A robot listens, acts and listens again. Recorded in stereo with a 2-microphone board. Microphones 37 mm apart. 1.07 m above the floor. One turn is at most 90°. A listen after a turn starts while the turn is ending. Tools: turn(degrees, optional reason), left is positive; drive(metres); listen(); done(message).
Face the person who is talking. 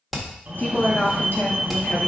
turn(degrees=60, reason="The woman speaking: about 60° left or 120° left.")
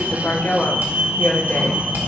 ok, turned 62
turn(degrees=70, reason="So it is at 70° left.")
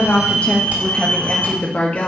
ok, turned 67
turn(degrees=45, reason="The woman speaking is now 45° left.")
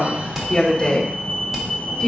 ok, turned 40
turn(degrees=20, reason="The woman speaking is now 20° left.")
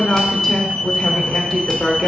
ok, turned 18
done("Facing the woman speaking.")